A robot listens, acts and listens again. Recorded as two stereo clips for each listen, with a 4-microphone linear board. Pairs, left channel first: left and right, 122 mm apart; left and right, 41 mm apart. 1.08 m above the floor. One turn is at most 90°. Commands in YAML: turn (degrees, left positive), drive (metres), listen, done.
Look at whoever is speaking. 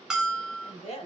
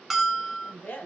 turn: 55
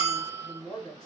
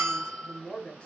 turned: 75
turn: 35
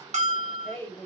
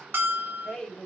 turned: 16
turn: 20
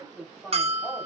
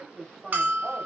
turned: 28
done: "Found it: a woman speaking, straight ahead, 1 to 2 m away."